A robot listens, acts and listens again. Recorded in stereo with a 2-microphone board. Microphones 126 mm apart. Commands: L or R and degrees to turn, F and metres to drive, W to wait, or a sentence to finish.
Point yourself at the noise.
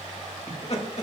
L55
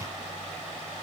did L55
W
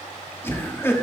L20
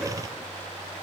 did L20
W
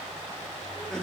W
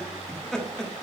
Found it: laughter, straight ahead.